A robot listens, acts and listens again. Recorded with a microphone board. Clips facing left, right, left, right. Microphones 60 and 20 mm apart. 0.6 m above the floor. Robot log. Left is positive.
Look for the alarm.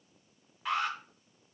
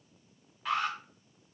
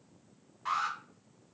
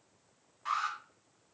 cmd yaw +30
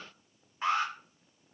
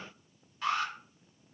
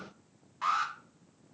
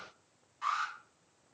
note: So it is at 150° left.
cmd yaw +150
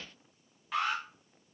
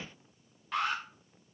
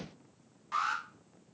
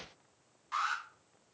end: Facing the alarm.